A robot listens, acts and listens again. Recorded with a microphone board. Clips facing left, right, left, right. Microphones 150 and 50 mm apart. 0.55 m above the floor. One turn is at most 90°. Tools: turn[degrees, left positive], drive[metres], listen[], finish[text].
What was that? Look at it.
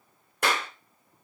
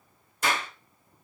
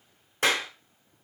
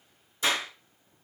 Thought: The clap: about 60° left or 120° left.
Action: turn[60]
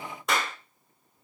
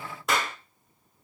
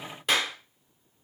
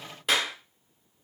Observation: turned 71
Action: finish[Found it: a clap, straight ahead.]